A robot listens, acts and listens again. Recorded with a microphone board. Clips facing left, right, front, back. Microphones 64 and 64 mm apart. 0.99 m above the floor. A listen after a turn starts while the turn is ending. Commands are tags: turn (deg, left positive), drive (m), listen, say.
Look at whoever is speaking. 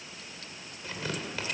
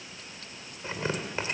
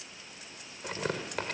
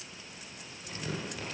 <listen/>
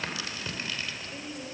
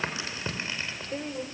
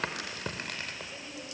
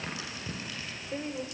<turn deg="-135"/>
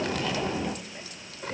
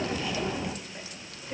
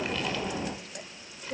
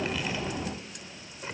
<listen/>
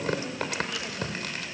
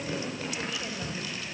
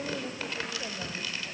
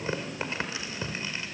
<listen/>
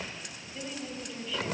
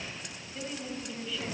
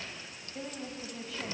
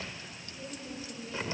<say>Facing the woman speaking.</say>